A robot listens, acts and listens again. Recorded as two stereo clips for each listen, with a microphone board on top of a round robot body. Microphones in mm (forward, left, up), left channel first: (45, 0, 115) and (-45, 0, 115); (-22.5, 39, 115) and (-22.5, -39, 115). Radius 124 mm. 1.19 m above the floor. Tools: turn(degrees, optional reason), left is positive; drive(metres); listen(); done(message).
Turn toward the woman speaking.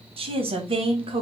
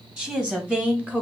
turn(degrees=-160, reason="The woman speaking: 160° right.")
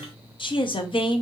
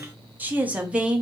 turn(degrees=-10, reason="The woman speaking is now 10° right.")
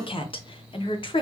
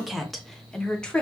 turn(degrees=15, reason="The woman speaking is now 15° left.")
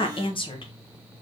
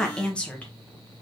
turn(degrees=15, reason="The woman speaking is now 15° left.")
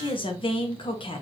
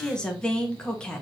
turn(degrees=10, reason="The woman speaking is now 10° left.")
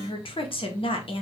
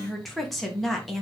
done("Found it: a woman speaking, straight ahead.")